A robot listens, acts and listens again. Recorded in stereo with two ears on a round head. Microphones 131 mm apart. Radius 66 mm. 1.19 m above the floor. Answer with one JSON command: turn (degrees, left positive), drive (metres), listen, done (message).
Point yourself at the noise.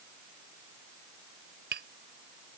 {"turn": -90}
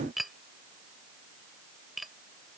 {"done": "Facing the tapping."}